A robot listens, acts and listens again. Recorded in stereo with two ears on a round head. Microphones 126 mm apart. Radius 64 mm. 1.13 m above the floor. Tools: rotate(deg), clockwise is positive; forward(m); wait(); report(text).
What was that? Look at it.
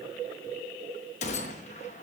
rotate(-50)
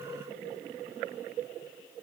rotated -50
wait()
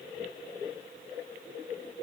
report("I heard a gunshot, but can't make it out now. It was about straight ahead or 80° left.")